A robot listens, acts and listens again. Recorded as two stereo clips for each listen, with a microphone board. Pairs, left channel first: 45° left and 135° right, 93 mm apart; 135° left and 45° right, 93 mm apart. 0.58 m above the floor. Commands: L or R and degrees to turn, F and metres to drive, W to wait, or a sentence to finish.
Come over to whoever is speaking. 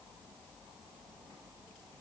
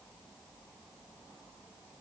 W
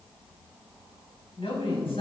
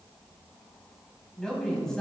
L50
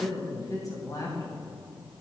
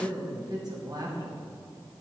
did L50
F1.0
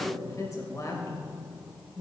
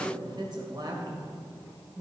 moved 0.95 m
R10
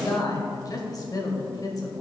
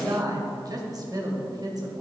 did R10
F1.0
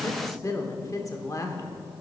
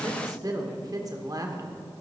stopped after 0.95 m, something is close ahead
Arrived at the woman speaking, straight ahead.